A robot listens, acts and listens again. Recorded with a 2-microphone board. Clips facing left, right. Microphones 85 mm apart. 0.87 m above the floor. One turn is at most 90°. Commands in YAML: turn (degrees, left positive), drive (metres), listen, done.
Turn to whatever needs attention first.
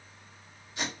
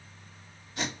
listen: true
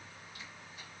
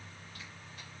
listen: true
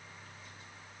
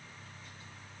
done: "I can't make out anything urgent, only tape being pulled."